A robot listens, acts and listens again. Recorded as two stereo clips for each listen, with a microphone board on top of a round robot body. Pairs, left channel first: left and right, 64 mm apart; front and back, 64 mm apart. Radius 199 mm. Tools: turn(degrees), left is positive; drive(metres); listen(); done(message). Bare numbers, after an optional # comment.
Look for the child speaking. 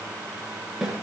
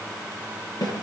listen()
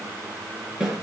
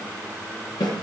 listen()
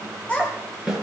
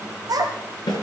# The child speaking: 160° left.
turn(160)
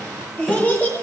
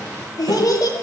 # The child speaking is now 25° left.
turn(25)
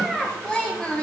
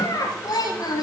# The child speaking is now 15° left.
turn(15)
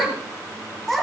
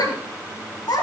done("Facing the child speaking.")